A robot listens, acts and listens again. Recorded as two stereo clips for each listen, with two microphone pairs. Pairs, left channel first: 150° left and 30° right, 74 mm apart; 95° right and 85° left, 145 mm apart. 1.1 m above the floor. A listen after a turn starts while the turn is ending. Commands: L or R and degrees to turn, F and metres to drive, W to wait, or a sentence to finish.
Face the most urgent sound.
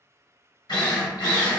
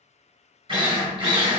W
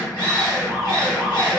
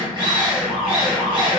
L20
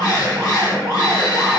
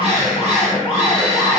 Facing the alarm, 1 to 2 m away.